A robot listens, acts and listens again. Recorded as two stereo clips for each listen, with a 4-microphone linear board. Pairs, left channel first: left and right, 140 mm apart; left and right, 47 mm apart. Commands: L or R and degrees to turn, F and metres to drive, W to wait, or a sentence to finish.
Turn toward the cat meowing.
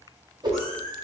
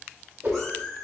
L30
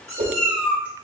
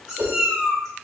R10
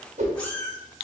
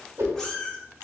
L15
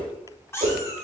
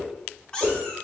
L25
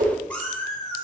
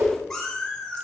L20
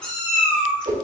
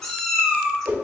L10
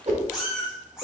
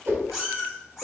Found it: a cat meowing, straight ahead.